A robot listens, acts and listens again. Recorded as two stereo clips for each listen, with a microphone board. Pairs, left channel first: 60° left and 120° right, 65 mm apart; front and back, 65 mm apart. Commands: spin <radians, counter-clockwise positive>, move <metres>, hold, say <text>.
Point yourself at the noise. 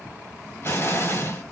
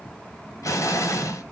spin 0.26
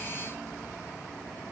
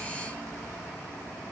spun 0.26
say I heard an explosion from this way, but can't make it out now.